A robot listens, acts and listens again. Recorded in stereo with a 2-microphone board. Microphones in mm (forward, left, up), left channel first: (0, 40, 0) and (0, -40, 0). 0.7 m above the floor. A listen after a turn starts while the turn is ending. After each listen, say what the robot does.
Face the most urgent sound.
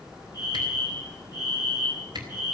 Turn 50° left.
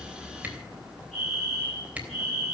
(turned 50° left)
Facing the fire alarm, over 4 m away.